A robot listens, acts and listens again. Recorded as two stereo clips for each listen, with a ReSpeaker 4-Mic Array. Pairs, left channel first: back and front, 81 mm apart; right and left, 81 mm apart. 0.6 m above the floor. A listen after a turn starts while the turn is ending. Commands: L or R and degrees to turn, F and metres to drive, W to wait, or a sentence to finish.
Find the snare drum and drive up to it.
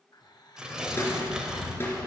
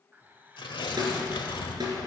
L120
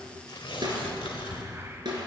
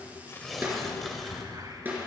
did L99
L20
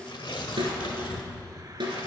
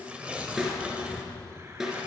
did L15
F1.0
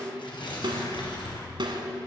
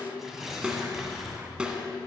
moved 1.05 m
L10
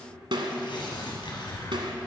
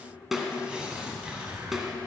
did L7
F1.0
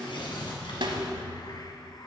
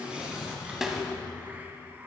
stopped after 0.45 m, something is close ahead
Arrived at the snare drum, straight ahead.